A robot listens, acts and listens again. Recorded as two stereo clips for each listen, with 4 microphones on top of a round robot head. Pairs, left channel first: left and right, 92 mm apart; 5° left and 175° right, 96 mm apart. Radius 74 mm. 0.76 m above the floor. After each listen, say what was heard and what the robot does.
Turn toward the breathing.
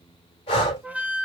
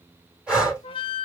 The breathing: 110° left. Turn 110° left.
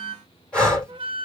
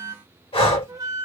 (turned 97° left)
The breathing is now 15° left. Turn 15° left.
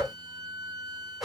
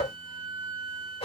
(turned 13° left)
Facing the breathing, 2 to 4 m away.